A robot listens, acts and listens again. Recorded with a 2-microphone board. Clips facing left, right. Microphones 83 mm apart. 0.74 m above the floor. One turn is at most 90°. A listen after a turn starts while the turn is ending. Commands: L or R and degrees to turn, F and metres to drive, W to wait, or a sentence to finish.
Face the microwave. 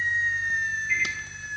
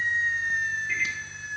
R60
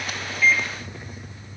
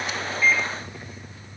W
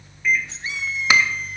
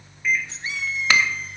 Facing the microwave.